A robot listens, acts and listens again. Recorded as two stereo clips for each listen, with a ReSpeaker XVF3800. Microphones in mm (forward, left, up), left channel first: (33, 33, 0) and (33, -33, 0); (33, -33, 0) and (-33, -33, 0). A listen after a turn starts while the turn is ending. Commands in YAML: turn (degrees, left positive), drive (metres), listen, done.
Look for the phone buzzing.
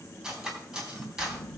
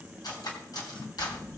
turn: 90
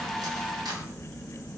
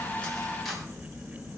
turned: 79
turn: 10
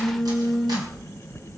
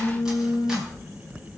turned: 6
done: "Found it: a phone buzzing, straight ahead, under 1 m away."